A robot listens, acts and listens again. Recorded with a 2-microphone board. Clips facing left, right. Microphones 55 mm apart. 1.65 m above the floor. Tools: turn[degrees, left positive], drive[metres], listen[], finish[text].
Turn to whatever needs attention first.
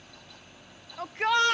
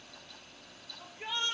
Thought: The shout: about 70° left or 110° left.
Action: turn[70]
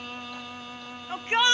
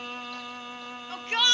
Thought: So it is at 20° left.
Action: turn[20]
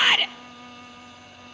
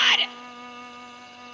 Action: finish[Found it: a shout, straight ahead, 1 to 2 m away.]